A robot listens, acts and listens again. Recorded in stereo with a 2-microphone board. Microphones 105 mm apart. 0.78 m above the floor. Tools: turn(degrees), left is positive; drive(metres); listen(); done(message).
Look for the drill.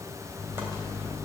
listen()
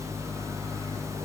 listen()
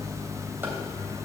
done("I can't make out a drill, only a microwave.")